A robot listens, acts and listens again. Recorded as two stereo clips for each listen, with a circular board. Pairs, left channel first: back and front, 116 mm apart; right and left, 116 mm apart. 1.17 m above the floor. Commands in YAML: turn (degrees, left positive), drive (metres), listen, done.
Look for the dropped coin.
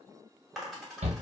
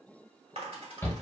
turn: 90
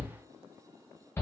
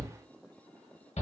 done: "Facing where the dropped coin came from. I can't hear it now."